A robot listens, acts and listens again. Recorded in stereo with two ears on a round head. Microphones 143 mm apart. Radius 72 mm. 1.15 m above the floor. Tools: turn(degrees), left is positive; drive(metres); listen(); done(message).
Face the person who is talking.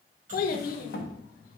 turn(degrees=55)
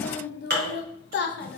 turn(degrees=65)
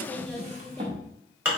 listen()
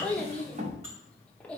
done("Facing the child speaking.")